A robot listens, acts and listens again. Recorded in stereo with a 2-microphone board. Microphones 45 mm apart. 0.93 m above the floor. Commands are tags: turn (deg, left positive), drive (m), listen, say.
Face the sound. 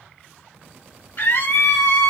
<turn deg="60"/>
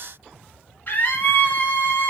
<turn deg="45"/>
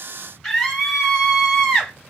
<say>Found it: a scream, straight ahead.</say>